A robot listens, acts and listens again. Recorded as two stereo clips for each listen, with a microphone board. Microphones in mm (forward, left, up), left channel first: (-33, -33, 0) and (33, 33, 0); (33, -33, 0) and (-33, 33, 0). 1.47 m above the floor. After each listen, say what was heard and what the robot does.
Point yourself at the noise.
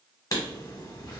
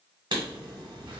The writing: 175° left. Turn 175° left.
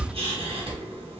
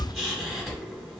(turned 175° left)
The writing is now 45° left. Turn 45° left.
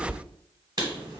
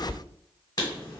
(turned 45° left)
Facing the writing.